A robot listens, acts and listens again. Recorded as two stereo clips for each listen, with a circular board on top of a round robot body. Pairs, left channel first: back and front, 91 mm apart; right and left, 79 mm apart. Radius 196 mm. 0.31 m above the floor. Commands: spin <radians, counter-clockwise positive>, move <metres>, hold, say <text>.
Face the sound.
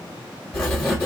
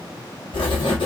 spin -1.75
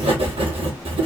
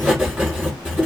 say Facing the writing, 1 to 2 m away.